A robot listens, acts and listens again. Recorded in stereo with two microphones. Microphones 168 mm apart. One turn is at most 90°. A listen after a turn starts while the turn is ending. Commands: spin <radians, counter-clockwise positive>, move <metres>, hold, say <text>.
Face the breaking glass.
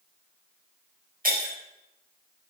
spin -1.05
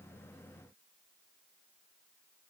hold
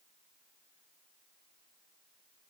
say I heard breaking glass, but can't make it out now. It was about straight ahead or 60° right.